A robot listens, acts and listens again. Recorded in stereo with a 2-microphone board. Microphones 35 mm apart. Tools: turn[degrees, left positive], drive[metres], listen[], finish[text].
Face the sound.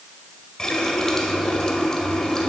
Thought: The running tap: about 20° left or 160° left.
Action: turn[20]
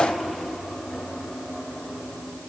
Action: finish[Found it: a running tap, straight ahead, 1 to 2 m away.]